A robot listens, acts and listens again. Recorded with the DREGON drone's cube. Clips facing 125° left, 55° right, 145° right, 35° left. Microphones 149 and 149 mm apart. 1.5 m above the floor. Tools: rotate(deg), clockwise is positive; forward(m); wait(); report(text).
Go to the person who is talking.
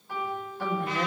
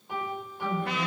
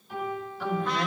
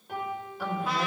rotate(-115)
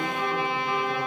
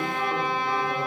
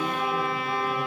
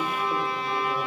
wait()
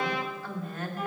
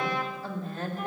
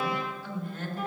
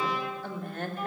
forward(1.0)
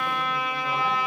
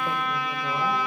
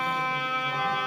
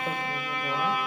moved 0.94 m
wait()
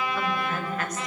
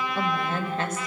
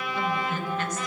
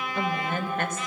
forward(1.0)
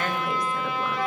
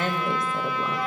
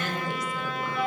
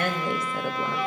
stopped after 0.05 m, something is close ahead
rotate(-10)
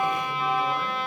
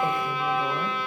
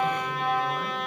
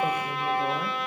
wait()
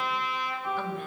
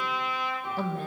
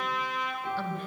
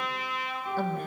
report("Arrived at the woman speaking, straight ahead.")